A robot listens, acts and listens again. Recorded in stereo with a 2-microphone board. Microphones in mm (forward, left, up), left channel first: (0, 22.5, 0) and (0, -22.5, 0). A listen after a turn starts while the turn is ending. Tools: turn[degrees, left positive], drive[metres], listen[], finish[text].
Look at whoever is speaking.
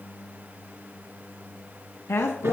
Thought: The woman speaking: about 75° left or 105° left.
Action: turn[75]
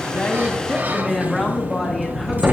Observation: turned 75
Action: finish[Facing the woman speaking.]